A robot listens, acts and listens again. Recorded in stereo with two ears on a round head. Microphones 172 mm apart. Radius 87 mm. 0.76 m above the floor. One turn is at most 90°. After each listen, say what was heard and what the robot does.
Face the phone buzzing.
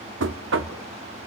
Keep listening.
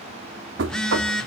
Turn 30° left.
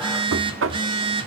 So it is at 25° right. Turn 25° right.
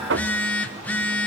The phone buzzing is now 10° left. Turn 10° left.
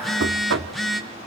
Facing the phone buzzing, 1 to 2 m away.